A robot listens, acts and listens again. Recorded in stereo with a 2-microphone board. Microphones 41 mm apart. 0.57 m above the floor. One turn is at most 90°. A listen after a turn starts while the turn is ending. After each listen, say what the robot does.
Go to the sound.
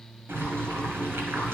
Turn 90° right.
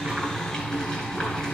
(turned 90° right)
Turn 15° left.
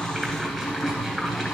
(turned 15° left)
Drive 1.0 m forward.
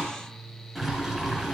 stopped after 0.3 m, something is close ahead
Something is in my way. I am facing the boiling but have not reached it.